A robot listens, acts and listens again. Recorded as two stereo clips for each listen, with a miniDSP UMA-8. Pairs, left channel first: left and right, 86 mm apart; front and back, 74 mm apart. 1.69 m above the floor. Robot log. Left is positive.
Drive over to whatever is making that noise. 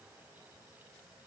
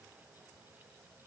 cmd idle
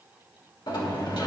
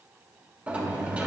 note: The sliding door: 110° left.
cmd yaw +110
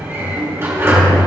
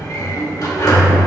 note: The sliding door is now 30° right.
cmd yaw -30
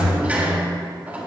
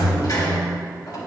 note: The sliding door is now 20° right.
cmd yaw -20
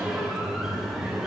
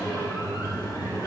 cmd fwd 1.0
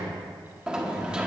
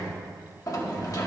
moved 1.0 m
note: The sliding door is now 15° right.
cmd yaw -15
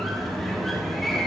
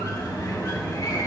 cmd fwd 1.0
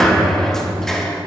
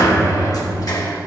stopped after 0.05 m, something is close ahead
end: I am next to the sliding door.